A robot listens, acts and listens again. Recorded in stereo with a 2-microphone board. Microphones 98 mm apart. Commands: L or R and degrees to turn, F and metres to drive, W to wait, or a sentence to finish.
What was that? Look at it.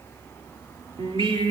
R70
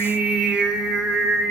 Facing the singing.